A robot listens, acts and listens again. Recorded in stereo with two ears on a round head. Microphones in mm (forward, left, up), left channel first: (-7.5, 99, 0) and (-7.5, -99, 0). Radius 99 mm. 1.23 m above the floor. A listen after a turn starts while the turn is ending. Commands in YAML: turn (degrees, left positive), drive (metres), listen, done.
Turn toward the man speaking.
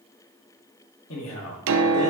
turn: 65
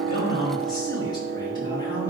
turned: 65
turn: 20
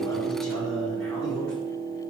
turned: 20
done: "Facing the man speaking, over 4 m away."